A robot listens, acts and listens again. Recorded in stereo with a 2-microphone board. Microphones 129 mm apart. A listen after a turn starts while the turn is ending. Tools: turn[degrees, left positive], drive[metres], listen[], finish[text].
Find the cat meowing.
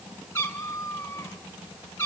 Thought: The cat meowing: about 20° left or 160° left.
Action: turn[20]
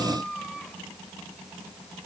Action: finish[Found it: a cat meowing, straight ahead.]